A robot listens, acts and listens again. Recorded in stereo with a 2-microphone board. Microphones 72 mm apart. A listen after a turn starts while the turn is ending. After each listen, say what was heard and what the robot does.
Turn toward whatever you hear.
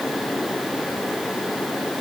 Keep listening.
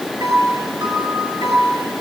Turn 90° right.
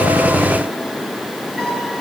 Facing the piano, over 4 m away.